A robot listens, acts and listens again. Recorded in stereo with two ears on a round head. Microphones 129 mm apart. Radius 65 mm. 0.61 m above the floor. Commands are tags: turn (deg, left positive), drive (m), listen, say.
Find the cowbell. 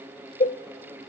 <turn deg="50"/>
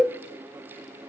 <say>Found it: a cowbell, straight ahead, 1 to 2 m away.</say>